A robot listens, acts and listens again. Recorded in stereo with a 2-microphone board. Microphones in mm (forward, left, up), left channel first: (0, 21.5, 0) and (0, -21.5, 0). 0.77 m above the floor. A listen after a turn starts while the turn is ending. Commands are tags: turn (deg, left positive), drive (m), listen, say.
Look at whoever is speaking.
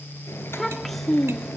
<turn deg="30"/>
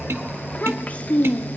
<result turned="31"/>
<turn deg="150"/>
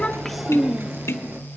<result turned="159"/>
<turn deg="-10"/>
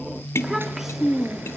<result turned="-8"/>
<say>Facing the child speaking, 1 to 2 m away.</say>